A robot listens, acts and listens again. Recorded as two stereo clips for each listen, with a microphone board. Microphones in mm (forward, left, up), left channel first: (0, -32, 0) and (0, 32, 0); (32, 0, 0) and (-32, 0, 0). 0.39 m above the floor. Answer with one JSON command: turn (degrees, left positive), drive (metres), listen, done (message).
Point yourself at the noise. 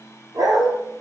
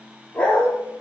{"turn": 70}
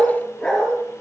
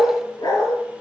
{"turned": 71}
{"turn": -15}
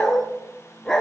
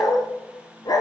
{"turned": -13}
{"turn": -10}
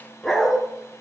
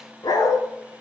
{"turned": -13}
{"turn": -10}
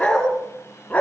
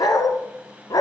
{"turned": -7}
{"turn": -25}
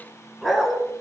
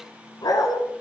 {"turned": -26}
{"done": "Found it: a dog barking, straight ahead."}